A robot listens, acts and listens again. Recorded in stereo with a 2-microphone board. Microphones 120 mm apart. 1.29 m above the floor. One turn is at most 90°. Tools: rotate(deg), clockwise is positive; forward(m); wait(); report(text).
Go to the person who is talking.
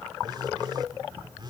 wait()
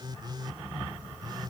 wait()
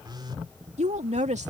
rotate(90)
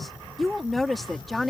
forward(1.0)
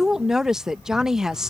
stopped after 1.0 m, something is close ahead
report("I am next to the woman speaking.")